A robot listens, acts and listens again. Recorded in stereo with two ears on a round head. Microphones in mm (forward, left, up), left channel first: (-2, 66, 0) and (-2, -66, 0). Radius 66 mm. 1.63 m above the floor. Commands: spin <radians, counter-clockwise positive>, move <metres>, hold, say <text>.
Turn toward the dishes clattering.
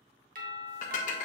spin 1.05
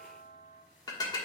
spin 0.61
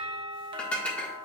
spin 0.17
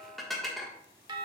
say Found it: dishes clattering, straight ahead, 1 to 2 m away.